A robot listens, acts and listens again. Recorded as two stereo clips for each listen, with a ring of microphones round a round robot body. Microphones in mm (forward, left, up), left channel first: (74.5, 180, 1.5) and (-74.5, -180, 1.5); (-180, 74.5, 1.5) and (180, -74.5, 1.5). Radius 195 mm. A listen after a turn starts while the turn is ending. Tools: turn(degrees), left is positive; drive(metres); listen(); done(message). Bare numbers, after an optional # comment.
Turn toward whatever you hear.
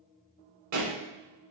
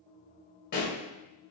# The pop: 135° right.
turn(-135)
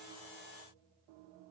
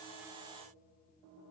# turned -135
done("I heard a pop from this way, but can't make it out now.")